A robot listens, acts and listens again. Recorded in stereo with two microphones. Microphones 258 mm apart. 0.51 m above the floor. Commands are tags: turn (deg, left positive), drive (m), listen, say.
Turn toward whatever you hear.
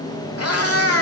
<turn deg="65"/>
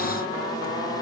<listen/>
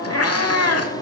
<turn deg="75"/>
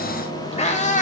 <turn deg="30"/>
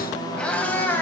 <turn deg="10"/>
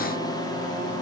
<listen/>
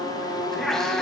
<say>Facing the cat meowing, 1 to 2 m away.</say>